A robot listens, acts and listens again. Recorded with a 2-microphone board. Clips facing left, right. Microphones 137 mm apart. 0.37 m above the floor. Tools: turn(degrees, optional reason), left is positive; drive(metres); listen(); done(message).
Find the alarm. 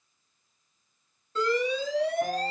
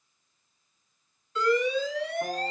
turn(degrees=35, reason="The alarm: about 35° left or 145° left.")
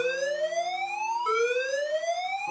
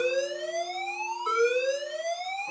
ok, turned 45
turn(degrees=100, reason="So it is at 100° left.")
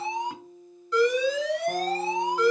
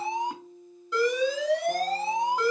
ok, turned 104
done("Facing the alarm.")